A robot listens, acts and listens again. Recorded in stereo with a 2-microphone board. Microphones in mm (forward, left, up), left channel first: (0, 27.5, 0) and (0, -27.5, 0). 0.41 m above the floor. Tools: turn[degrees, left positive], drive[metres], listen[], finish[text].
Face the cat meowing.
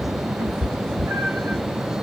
Thought: The cat meowing: about 50° right or 130° right.
Action: turn[-50]
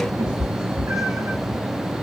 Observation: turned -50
Thought: So it is at 75° right.
Action: turn[-75]
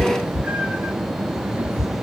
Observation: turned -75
Thought: The cat meowing is now 30° right.
Action: turn[-30]
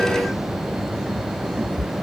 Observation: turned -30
Thought: The cat meowing is now 10° right.
Action: turn[-10]
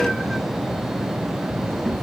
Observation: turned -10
Action: listen[]
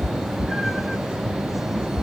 Action: finish[Found it: a cat meowing, straight ahead, under 1 m away.]